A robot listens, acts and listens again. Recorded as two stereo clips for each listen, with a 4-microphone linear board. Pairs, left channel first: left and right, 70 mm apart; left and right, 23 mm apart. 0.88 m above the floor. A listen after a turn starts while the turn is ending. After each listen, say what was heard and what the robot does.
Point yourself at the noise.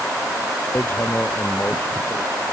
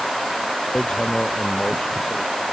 The hammering: about 30° left or 150° left. Turn 30° left.
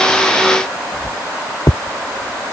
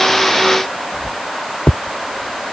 So it is at 125° left. Turn 125° left.
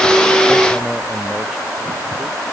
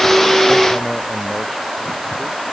Keep listening.
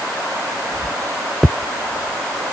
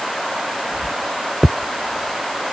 Found it: hammering, straight ahead.